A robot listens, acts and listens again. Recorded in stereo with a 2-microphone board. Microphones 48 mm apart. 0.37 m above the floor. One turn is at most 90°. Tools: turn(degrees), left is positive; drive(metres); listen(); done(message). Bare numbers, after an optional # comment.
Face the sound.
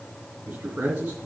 # The man speaking: about 35° right or 145° right.
turn(-35)
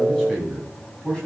# So it is at 15° left.
turn(15)
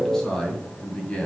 # The man speaking is now 25° left.
turn(25)
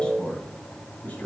# The man speaking is now 35° left.
turn(35)
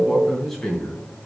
done("Facing the man speaking, 2 to 4 m away.")